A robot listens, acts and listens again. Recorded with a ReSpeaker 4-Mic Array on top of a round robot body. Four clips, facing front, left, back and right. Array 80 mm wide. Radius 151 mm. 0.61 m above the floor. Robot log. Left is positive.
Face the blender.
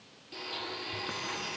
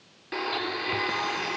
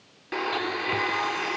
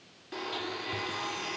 note: The blender: 155° left.
cmd yaw +155
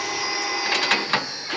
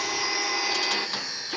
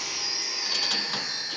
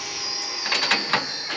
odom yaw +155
cmd idle
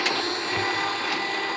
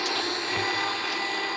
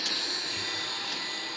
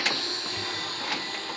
note: The blender is now 30° left.
cmd yaw +30
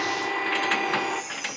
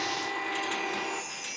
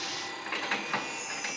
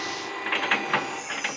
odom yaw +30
end: Facing the blender, under 1 m away.